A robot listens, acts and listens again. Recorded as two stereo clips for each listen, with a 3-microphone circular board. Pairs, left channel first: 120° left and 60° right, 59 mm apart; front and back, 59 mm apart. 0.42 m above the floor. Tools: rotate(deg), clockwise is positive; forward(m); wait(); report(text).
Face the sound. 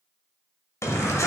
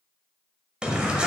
rotate(-110)
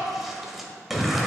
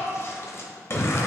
rotate(-30)
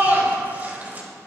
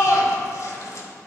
report("Found it: a shout, straight ahead.")